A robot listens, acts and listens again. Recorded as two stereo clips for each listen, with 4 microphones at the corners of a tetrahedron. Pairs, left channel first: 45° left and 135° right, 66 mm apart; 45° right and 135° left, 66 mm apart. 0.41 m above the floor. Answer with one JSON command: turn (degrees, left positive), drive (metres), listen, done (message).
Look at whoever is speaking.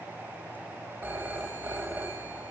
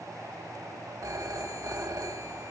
{"listen": true}
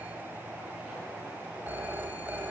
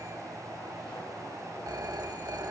{"listen": true}
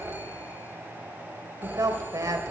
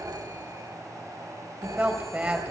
{"turn": -155}
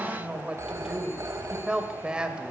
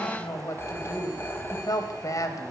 {"turn": -65}
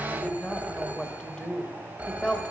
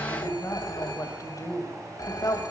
{"turn": -30}
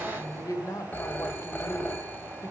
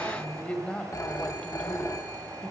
{"turn": 25}
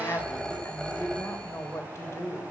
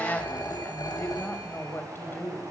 {"done": "Found it: a woman speaking, straight ahead."}